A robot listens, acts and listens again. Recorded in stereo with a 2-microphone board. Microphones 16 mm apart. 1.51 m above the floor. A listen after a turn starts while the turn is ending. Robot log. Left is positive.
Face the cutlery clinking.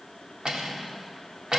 note: The cutlery clinking: about 50° right or 130° right.
cmd yaw -50
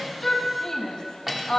end: Facing the cutlery clinking.